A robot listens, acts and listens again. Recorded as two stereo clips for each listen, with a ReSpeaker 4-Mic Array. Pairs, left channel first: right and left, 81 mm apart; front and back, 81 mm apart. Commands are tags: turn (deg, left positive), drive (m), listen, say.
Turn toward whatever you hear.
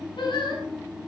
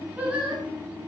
<turn deg="-110"/>
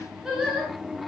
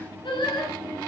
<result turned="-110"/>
<say>Found it: singing, straight ahead, over 4 m away.</say>